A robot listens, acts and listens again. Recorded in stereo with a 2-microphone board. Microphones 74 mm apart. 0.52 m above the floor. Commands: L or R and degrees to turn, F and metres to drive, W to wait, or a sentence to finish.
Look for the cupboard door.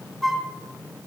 W
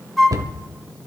R60
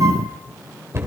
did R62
R45
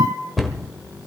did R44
Found it: a cupboard door, straight ahead, 1 to 2 m away.